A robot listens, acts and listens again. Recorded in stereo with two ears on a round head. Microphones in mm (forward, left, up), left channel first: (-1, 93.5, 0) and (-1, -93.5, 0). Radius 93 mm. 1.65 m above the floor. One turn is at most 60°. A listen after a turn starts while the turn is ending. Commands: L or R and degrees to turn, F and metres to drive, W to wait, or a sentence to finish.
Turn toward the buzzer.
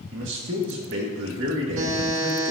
R60
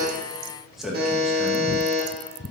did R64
R50
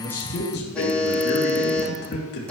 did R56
Facing the buzzer, 2 to 4 m away.